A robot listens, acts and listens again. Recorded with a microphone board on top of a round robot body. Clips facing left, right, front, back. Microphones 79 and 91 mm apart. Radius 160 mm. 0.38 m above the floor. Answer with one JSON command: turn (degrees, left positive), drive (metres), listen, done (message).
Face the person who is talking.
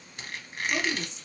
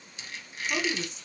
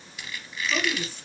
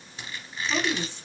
{"turn": -120}
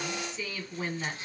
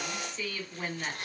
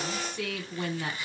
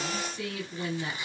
{"done": "Found it: a woman speaking, straight ahead, 1 to 2 m away."}